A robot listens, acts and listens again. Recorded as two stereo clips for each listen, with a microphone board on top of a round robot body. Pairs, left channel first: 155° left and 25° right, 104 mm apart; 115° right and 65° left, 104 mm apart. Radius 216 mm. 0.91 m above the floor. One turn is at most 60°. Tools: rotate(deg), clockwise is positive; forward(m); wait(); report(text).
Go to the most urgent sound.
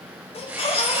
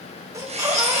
rotate(-60)
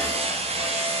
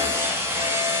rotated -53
rotate(-60)
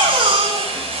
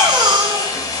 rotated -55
rotate(-15)
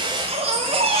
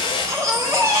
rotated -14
forward(1.0)
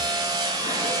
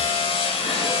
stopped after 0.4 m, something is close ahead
wait()
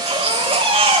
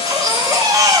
rotate(-10)
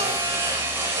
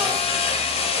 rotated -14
wait()
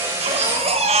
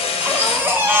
report("Something is in my way. I am facing the baby crying but have not reached it.")